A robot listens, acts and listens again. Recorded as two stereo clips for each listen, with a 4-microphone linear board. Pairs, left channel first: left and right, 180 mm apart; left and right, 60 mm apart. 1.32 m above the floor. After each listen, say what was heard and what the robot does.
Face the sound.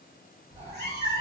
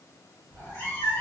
The cat meowing: about 60° left or 120° left. Turn 60° left.
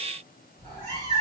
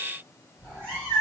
So it is at 15° left. Turn 15° left.
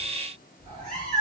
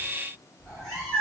Facing the cat meowing, 1 to 2 m away.